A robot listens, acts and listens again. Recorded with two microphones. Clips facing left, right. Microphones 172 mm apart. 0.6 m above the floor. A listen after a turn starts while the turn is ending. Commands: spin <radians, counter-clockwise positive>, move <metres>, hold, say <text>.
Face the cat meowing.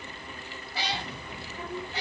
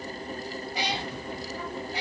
spin -0.52
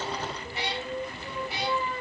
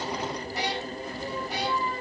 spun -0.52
spin -2.44
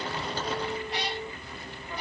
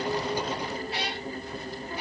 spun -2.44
spin -0.17
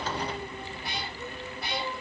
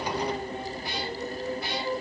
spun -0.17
say Facing the cat meowing.